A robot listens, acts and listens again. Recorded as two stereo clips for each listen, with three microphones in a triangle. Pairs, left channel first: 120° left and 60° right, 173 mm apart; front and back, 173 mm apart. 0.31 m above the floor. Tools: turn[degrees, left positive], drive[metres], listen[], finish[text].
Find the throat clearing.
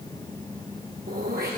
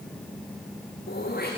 Thought: The throat clearing: 30° right.
Action: turn[-30]
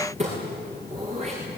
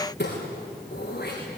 Thought: The throat clearing is now 10° right.
Action: turn[-10]
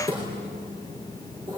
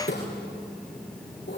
Action: finish[Facing the throat clearing, over 4 m away.]